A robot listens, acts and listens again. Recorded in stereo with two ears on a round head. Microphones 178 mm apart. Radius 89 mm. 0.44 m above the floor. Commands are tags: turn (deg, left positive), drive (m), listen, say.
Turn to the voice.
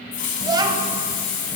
<turn deg="-20"/>
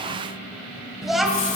<say>Found it: a child speaking, straight ahead, 1 to 2 m away.</say>